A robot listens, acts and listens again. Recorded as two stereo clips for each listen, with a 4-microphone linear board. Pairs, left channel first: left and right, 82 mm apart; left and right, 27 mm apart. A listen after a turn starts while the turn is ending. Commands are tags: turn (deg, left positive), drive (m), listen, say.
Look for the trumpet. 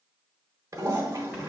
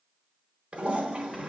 <listen/>
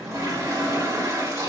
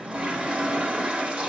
<listen/>
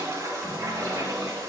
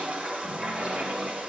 <say>I can't make out a trumpet to turn to.</say>